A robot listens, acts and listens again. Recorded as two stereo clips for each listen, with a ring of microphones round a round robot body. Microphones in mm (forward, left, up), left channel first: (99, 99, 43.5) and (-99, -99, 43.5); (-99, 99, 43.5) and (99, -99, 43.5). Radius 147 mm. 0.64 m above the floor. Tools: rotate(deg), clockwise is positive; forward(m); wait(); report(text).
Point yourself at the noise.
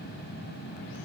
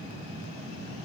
wait()
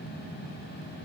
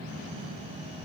wait()
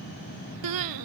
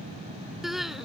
rotate(135)
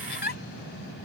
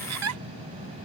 rotate(10)
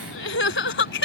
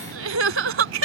report("Facing the crying.")